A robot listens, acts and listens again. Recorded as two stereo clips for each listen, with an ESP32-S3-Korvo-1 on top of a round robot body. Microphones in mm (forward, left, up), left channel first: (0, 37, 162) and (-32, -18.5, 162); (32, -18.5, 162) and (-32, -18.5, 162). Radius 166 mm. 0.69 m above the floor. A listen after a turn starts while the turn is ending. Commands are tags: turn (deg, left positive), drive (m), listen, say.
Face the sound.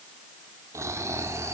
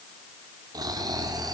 <turn deg="-165"/>
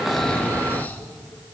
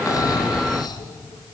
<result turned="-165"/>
<say>Facing the snoring, 1 to 2 m away.</say>